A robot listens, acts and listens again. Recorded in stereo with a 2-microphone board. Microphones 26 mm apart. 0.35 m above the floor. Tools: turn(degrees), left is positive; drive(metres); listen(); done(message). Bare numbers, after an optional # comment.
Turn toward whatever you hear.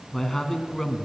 turn(30)
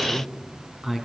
# So it is at 15° right.
turn(-15)
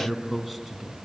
done("Found it: a man speaking, straight ahead, 2 to 4 m away.")